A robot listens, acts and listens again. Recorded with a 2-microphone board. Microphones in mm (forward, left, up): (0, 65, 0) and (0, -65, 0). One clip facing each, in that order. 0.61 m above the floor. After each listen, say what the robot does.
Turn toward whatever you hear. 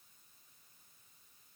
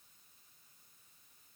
Keep listening.
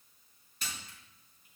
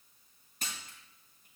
Turn 50° right.
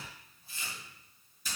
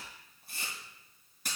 Turn 80° right.
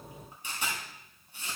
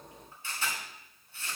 Turn 15° left.
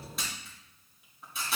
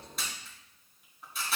Found it: a camera shutter, straight ahead.